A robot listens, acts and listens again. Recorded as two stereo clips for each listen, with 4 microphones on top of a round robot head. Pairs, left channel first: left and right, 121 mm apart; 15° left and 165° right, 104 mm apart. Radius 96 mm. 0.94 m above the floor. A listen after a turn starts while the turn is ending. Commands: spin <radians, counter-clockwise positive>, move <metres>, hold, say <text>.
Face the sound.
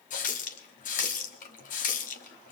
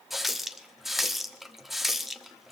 spin 1.83
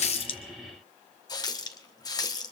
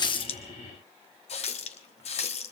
spin 0.52
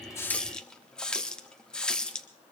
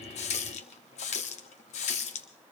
say Found it: a running tap, straight ahead.